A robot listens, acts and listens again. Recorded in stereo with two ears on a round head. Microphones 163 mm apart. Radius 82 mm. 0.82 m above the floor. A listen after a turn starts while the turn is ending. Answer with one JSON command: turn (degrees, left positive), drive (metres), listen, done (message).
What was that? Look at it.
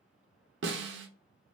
{"turn": -70}
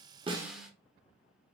{"done": "Found it: a snare drum, straight ahead, under 1 m away."}